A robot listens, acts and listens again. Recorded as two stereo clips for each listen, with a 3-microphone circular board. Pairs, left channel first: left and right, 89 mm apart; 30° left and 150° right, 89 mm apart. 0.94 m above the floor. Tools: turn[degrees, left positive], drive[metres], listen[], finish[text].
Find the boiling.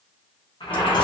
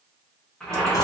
Thought: The boiling: 115° left.
Action: turn[115]
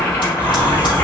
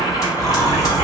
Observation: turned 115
Thought: The boiling is now 25° left.
Action: turn[25]
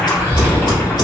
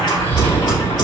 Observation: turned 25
Thought: The boiling is now 15° left.
Action: turn[15]
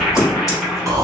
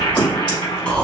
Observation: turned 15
Action: finish[Found it: boiling, straight ahead.]